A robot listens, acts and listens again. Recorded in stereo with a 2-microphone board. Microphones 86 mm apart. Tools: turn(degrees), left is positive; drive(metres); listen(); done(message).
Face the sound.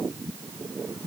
listen()
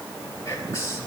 turn(degrees=35)
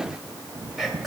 done("Facing the whispering.")